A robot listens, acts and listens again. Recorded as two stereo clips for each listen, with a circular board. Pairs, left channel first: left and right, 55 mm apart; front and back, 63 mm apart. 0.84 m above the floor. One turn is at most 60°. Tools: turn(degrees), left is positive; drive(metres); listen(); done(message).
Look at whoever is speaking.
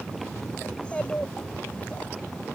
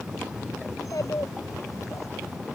turn(degrees=25)
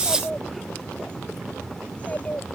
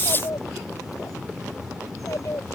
turn(degrees=30)
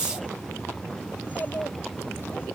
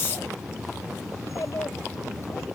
turn(degrees=35)
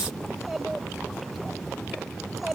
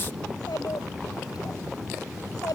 done("Facing the child speaking.")